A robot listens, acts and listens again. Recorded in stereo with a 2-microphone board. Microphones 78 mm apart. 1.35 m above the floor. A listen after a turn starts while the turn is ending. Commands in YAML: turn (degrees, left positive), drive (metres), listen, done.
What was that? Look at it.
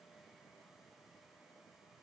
listen: true
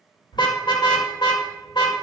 turn: 70
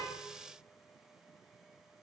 listen: true
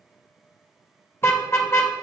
turn: 35
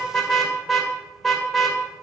done: "Found it: a car horn, straight ahead."